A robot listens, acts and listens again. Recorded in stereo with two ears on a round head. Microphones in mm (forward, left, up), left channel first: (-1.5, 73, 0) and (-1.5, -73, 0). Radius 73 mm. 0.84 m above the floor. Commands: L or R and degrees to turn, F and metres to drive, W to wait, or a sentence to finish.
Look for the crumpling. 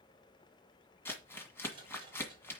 L30
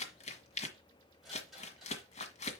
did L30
L135
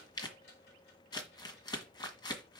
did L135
L30
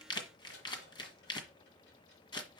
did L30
L30
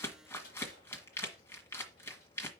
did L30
L15
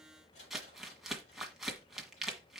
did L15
Facing the crumpling, 1 to 2 m away.